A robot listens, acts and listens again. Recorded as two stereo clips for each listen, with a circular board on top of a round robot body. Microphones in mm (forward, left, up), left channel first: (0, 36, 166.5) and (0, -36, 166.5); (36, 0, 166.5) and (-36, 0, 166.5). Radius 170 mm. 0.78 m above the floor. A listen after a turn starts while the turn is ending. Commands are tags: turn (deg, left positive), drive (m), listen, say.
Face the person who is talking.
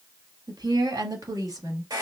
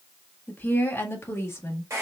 <turn deg="-50"/>
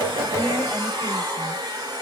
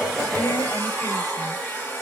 <listen/>
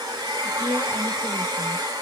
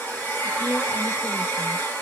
<listen/>
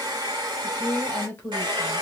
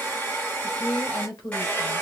<turn deg="30"/>
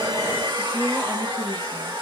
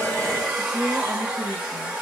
<say>Facing the woman speaking, 2 to 4 m away.</say>